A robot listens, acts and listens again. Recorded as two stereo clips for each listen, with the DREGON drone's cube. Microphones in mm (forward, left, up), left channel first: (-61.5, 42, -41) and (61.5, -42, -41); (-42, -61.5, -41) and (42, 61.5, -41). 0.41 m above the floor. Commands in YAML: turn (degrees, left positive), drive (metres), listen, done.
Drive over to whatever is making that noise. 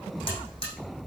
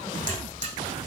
turn: 95
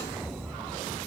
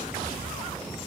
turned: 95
listen: true
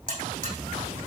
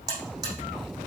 turn: -10
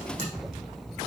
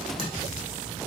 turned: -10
listen: true
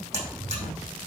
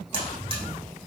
drive: 1.0
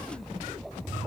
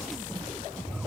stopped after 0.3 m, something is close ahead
listen: true
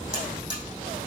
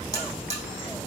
turn: 10
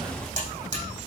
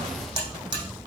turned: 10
done: "Blocked. The buzzer is further on, straight ahead."